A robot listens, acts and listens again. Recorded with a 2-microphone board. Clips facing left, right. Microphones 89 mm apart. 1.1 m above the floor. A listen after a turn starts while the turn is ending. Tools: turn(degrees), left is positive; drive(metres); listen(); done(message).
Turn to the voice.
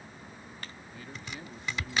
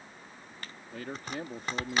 turn(degrees=-90)
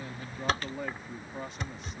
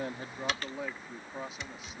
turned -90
done("Facing the man speaking.")